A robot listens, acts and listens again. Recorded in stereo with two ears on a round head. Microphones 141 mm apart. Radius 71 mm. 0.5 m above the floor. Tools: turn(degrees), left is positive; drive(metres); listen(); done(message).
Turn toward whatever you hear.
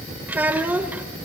turn(degrees=-30)
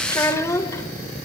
turn(degrees=20)
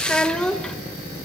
done("Found it: a child speaking, straight ahead.")